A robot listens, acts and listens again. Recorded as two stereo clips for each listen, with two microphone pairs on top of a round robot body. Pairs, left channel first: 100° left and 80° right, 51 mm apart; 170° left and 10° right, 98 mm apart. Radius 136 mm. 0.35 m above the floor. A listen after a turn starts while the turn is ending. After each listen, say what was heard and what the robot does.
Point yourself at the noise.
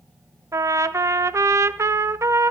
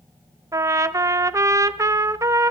The trumpet: 65° right. Turn 65° right.
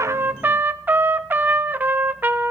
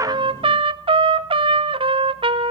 The trumpet is now 30° right. Turn 30° right.
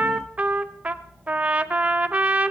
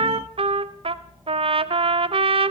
The trumpet is now 20° right. Turn 20° right.
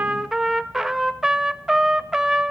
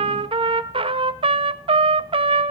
Facing the trumpet, under 1 m away.